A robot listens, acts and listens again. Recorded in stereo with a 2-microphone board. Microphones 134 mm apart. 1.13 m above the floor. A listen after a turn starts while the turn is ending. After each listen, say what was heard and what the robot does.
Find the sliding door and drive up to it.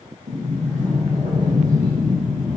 The sliding door: about 65° right or 115° right. Turn 65° right.
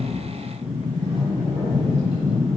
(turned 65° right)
So it is at 45° right. Turn 45° right.
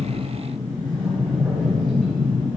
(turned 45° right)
Drive 1.0 m forward.
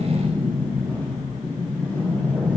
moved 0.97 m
The sliding door is now 15° left. Turn 15° left.
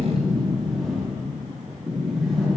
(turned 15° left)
Drive 1.0 m forward.
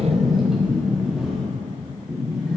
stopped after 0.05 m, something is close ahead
I am next to the sliding door.